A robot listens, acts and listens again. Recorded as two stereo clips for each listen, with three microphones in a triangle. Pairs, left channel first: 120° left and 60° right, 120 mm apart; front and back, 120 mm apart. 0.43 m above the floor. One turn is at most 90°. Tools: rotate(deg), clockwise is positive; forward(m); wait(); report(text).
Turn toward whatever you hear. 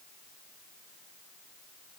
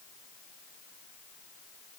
wait()
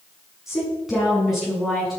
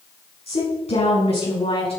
rotate(-30)
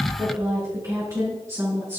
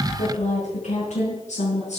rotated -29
report("Found it: a woman speaking, straight ahead.")